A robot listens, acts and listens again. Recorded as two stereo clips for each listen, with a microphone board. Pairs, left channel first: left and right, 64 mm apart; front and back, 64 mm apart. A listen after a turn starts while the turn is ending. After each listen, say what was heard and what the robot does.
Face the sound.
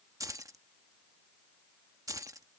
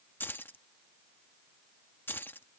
The keys jangling: 60° right. Turn 60° right.
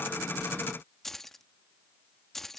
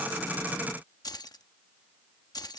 Found it: keys jangling, straight ahead.